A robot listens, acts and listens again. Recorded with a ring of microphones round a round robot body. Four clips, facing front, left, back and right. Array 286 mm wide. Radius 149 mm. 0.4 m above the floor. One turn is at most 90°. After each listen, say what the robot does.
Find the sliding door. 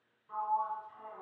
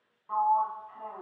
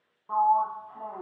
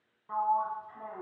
Turn 90° right.
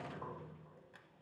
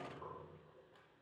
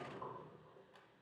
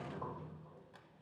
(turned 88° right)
Turn 70° right.
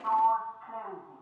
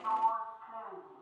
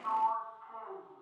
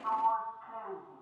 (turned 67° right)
Facing the sliding door, 1 to 2 m away.